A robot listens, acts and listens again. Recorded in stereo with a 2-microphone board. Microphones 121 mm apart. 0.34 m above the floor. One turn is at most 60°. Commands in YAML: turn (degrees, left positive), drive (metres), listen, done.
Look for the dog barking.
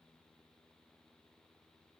listen: true
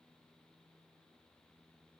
listen: true
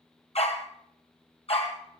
turn: 55
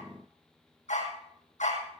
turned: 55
turn: 60
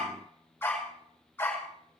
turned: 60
turn: 15
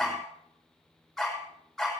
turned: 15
done: "Found it: a dog barking, straight ahead."